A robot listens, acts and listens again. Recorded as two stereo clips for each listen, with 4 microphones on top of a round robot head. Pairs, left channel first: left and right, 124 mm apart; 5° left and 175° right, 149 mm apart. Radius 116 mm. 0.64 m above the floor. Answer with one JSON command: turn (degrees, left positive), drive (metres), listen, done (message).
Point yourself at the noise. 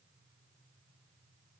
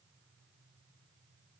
{"listen": true}
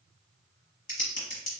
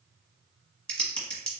{"turn": 85}
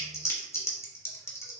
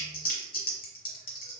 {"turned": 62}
{"turn": 25}
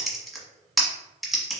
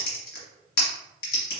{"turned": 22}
{"done": "Found it: typing on a keyboard, straight ahead, 1 to 2 m away."}